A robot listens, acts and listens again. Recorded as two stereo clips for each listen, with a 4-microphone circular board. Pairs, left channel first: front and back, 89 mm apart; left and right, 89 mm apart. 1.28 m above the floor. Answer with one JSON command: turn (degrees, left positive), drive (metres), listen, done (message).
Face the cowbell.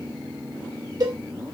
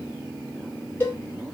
{"turn": 150}
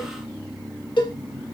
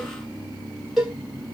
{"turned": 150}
{"done": "Found it: a cowbell, straight ahead."}